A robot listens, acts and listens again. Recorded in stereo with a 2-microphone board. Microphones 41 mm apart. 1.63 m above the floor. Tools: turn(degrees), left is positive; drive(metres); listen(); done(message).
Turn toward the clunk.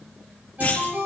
turn(degrees=45)
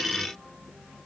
listen()
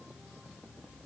done("I heard a clunk, but can't make it out now. It was about straight ahead or 90° left.")